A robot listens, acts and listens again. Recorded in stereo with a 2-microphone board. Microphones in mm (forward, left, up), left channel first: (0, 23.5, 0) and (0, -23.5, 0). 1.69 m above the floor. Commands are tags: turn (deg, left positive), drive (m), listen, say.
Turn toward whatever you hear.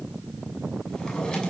<turn deg="20"/>
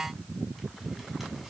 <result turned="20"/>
<listen/>
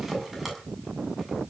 <say>Found it: a drawer, straight ahead, over 4 m away.</say>